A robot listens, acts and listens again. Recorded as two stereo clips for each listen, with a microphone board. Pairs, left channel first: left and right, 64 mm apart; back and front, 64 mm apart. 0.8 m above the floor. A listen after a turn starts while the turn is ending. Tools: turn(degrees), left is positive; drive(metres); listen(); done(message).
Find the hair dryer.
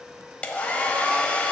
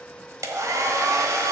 turn(degrees=20)
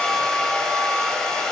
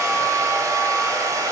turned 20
turn(degrees=10)
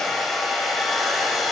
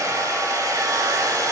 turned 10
done("Found it: a hair dryer, straight ahead.")